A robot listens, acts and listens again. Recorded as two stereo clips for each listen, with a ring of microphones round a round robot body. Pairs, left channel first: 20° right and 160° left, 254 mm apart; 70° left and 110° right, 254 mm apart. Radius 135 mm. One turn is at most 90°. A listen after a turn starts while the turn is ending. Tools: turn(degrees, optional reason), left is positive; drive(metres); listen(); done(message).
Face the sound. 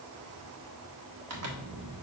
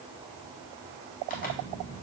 turn(degrees=90, reason="The zipper: 125° left.")
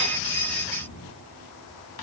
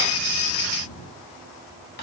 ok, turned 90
turn(degrees=35, reason="Nothing new. It was at 35° left.")
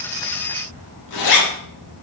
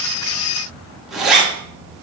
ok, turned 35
turn(degrees=-25, reason="The zipper is now 25° right.")
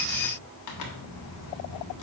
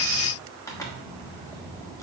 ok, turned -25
turn(degrees=-10, reason="The zipper is now 10° right.")
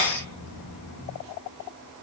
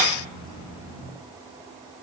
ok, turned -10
listen()
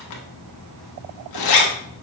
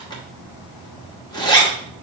done("Found it: a zipper, straight ahead.")